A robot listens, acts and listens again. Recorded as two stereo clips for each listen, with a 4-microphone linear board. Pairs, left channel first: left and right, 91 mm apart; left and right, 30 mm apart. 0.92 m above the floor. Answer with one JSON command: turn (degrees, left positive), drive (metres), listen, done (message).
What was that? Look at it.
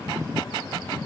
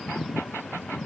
{"listen": true}
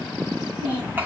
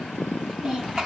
{"turn": -20}
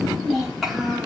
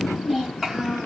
{"turn": -30}
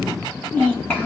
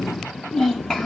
{"turn": 20}
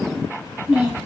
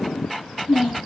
{"done": "Found it: a child speaking, straight ahead, over 4 m away."}